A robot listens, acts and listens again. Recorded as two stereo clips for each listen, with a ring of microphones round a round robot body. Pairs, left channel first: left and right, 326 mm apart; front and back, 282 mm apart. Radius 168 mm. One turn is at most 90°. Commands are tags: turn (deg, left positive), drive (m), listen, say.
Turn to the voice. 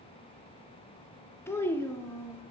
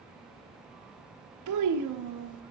<turn deg="90"/>
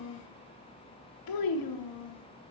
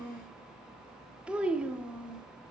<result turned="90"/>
<turn deg="90"/>
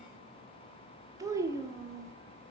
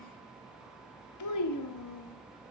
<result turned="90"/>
<turn deg="-10"/>
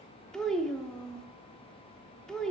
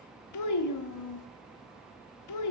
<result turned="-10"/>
<say>Found it: a child speaking, straight ahead, under 1 m away.</say>